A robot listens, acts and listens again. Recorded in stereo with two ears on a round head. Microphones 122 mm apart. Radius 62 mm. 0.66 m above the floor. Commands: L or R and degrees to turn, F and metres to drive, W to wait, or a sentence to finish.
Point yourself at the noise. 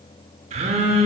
R50
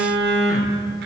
R80
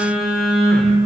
Found it: a phone buzzing, straight ahead, under 1 m away.